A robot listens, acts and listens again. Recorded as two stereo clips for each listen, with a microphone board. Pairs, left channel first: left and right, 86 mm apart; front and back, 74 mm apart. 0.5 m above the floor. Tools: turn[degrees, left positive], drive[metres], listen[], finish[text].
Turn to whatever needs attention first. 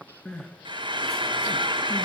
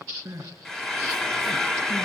Thought: The crying: 175° left.
Action: turn[175]
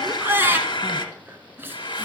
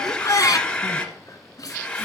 Thought: The crying is now 30° right.
Action: turn[-30]
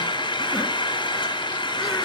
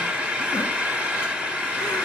Action: listen[]
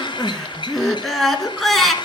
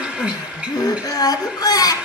Action: finish[Facing the crying.]